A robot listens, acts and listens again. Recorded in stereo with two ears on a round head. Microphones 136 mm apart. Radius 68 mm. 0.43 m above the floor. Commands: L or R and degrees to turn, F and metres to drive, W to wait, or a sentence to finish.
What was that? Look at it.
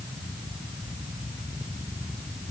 W
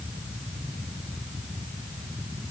W
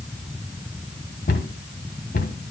L60
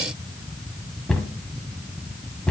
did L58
Facing the cupboard door, 1 to 2 m away.